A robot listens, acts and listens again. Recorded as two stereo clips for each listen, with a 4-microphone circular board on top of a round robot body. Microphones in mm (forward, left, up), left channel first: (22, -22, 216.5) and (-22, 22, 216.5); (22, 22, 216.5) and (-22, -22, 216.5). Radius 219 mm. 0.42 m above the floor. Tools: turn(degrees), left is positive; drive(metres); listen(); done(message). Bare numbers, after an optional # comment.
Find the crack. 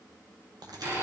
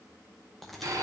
# The crack: 130° left.
turn(130)
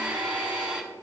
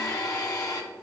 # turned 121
# Nothing new. It was at 10° left.
turn(10)
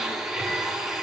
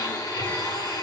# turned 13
done("I heard a crack from this way, but can't make it out now.")